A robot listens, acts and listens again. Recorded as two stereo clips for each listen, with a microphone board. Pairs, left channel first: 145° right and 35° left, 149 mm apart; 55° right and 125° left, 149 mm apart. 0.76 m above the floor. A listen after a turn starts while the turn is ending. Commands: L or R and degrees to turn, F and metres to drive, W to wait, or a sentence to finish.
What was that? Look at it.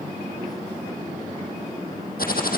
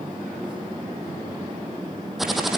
R145
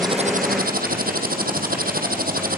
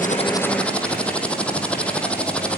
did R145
L30
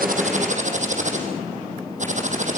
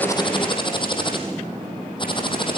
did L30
Facing the typing on a keyboard.